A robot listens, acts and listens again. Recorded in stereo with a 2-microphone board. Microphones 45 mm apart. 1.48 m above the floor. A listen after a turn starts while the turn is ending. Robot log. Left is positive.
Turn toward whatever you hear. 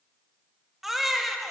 cmd yaw -30
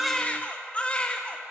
note: So it is at 25° left.
cmd yaw +25
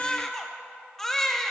end: Found it: a baby crying, straight ahead, under 1 m away.